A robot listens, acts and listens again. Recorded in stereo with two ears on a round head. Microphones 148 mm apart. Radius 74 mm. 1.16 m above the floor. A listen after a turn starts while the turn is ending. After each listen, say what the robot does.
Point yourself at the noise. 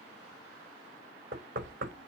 Turn 55° right.
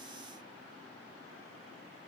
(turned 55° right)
Keep listening.
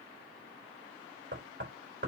Turn 70° right.
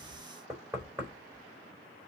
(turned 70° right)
Turn 25° right.
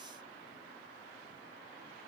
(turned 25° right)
Keep listening.
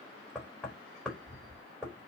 Found it: knocking, straight ahead, over 4 m away.